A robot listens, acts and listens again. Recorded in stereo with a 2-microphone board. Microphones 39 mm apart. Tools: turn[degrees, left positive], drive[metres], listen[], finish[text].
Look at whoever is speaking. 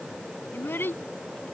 Thought: The child speaking: about 70° left or 110° left.
Action: turn[70]
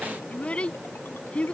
Thought: So it is at 35° left.
Action: turn[35]
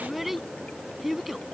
Action: finish[Found it: a child speaking, straight ahead.]